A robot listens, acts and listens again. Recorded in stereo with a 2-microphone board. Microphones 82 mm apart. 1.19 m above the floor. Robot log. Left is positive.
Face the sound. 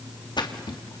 note: The splash: about 75° left or 105° left.
cmd yaw +75
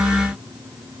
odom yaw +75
cmd idle
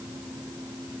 end: I heard a splash, but can't make it out now. It was about straight ahead or 30° left.